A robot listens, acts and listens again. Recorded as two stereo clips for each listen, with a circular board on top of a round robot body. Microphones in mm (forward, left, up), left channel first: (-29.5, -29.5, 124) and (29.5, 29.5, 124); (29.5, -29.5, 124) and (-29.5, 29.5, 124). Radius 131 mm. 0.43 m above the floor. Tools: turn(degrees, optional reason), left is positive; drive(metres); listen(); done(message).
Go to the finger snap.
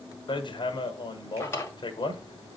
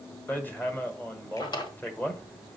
listen()
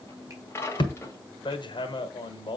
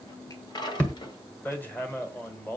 listen()
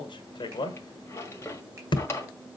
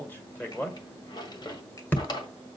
done("I can't make out a finger snap to turn to.")